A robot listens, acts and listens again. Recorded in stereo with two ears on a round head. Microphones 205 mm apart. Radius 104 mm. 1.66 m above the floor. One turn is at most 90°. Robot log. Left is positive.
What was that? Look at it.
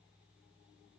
cmd idle
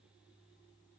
cmd idle
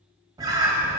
note: The bird: about 15° right or 165° right.
cmd yaw -15
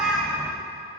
end: Found it: a bird, straight ahead.